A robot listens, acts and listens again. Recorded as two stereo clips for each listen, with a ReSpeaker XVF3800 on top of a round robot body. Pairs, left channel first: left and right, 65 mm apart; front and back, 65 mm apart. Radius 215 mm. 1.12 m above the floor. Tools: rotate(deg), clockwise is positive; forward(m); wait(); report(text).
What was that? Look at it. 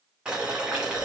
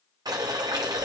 rotate(170)
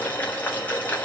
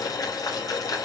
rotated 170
rotate(-25)
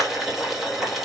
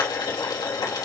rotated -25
report("Facing the boiling, 2 to 4 m away.")